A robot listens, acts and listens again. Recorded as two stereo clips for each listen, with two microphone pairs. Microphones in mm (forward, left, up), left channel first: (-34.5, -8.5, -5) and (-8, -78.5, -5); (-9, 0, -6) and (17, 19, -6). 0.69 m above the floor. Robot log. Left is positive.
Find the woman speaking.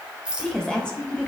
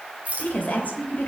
note: The woman speaking: 170° right.
cmd yaw -170
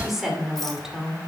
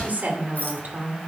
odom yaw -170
note: The woman speaking is now 10° left.
cmd yaw +10
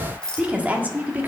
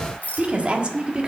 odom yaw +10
note: The woman speaking is now 15° right.
cmd yaw -15
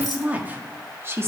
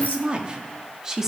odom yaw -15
note: The woman speaking is now 35° right.
cmd yaw -35
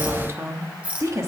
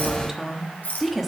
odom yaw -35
note: The woman speaking is now 55° right.
cmd yaw -55
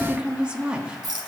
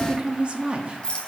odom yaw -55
end: Facing the woman speaking.